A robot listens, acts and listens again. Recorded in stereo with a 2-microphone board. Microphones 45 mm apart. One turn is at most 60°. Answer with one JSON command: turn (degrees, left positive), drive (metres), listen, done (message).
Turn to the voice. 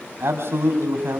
{"turn": -60}
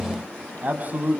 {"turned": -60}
{"turn": -45}
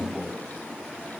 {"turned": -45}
{"turn": 10}
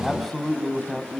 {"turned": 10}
{"done": "Found it: a man speaking, straight ahead, over 4 m away."}